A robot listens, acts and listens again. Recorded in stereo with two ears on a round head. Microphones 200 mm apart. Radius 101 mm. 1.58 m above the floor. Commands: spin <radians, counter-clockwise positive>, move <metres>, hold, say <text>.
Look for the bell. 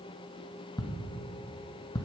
hold
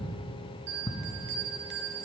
spin -0.87
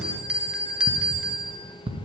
say Facing the bell.